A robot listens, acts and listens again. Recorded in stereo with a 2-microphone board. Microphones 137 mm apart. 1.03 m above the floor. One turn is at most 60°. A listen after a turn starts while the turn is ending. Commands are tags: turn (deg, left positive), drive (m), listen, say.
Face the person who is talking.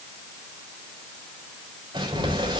<listen/>
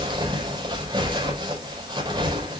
<listen/>
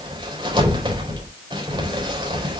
<say>I can't make out anyone speaking, only crumpling.</say>